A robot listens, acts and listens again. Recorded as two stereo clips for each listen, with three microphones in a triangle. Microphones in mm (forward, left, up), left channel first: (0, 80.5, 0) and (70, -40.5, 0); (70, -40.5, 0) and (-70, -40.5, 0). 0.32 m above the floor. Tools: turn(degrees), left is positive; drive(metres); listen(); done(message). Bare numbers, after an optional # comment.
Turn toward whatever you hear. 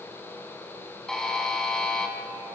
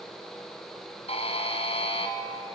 # The buzzer: 35° left.
turn(35)
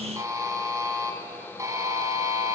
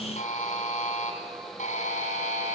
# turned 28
done("Facing the buzzer, 2 to 4 m away.")